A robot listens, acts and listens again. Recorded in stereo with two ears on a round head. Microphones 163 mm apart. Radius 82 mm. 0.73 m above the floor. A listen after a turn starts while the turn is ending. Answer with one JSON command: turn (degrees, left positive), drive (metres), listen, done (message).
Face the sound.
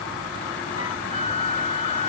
{"turn": 35}
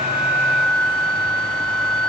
{"done": "Found it: a flute, straight ahead."}